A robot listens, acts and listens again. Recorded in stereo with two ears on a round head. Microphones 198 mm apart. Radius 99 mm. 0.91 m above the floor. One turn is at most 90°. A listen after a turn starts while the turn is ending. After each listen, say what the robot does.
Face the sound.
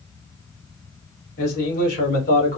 Turn 40° left.
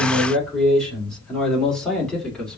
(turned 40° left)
Found it: a man speaking, straight ahead.